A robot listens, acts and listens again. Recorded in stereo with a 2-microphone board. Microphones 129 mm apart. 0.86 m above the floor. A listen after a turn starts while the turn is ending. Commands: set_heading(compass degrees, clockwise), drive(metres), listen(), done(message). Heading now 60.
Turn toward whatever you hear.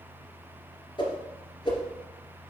set_heading(20)
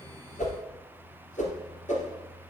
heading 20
set_heading(285)
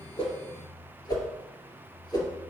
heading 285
set_heading(255)
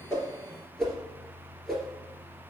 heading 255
done("Facing the whoosh.")